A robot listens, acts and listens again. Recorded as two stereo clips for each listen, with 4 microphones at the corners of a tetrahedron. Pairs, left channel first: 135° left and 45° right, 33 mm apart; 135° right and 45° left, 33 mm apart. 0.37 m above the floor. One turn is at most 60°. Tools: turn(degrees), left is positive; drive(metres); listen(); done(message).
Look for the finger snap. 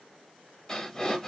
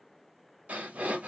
listen()
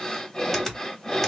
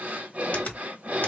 turn(degrees=-60)
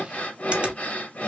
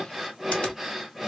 turn(degrees=-60)
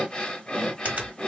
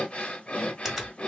turn(degrees=-30)
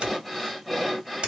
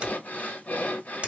done("Facing the finger snap.")